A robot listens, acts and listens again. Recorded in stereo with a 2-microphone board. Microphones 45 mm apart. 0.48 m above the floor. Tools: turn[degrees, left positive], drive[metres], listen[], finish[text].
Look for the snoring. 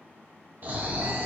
Thought: The snoring: about 45° right or 135° right.
Action: turn[-45]
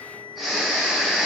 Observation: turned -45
Action: finish[Found it: snoring, straight ahead.]